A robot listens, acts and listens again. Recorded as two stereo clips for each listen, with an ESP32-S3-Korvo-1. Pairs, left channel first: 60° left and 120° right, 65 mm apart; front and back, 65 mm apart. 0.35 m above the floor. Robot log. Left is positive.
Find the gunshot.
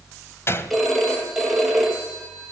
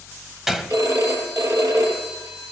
note: The gunshot: 95° left.
cmd yaw +95
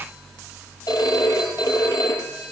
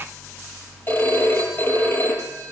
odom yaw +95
end: I heard a gunshot from this way, but can't make it out now.